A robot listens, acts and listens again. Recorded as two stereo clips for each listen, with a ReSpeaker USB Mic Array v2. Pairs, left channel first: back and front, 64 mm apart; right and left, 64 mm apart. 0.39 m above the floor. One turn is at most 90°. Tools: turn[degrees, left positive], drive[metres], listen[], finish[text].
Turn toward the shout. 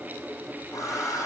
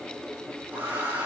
Action: listen[]
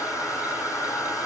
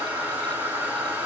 Action: listen[]
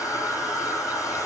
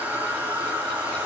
Action: finish[I can't make out a shout to turn to.]